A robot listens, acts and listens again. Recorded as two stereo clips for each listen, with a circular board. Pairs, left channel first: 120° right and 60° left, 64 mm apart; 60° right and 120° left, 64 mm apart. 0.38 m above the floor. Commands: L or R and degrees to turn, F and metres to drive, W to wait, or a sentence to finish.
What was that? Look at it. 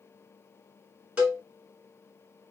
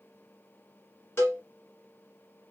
R10
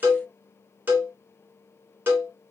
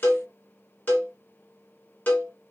Facing the cowbell, 1 to 2 m away.